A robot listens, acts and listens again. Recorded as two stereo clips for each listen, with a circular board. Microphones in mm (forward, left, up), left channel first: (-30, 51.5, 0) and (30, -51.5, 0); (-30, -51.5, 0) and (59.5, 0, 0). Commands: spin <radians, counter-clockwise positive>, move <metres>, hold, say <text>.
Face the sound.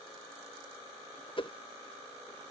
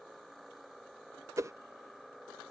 spin 1.48
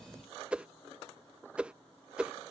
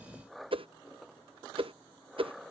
spin 0.35
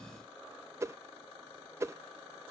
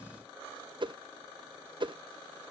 say Facing the whoosh.